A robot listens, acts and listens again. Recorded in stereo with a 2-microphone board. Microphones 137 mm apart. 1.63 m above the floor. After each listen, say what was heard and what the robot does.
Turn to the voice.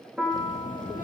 The child speaking: about 75° left or 105° left. Turn 75° left.
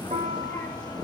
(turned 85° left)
So it is at 15° left. Turn 15° left.
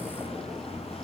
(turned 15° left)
Facing the child speaking, 2 to 4 m away.